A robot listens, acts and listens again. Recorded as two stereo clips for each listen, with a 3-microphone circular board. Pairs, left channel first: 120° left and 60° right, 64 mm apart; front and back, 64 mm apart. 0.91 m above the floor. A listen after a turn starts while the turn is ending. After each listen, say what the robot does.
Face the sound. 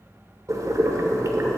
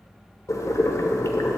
Turn 30° right.
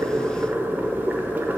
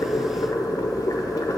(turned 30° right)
Facing the boiling, 1 to 2 m away.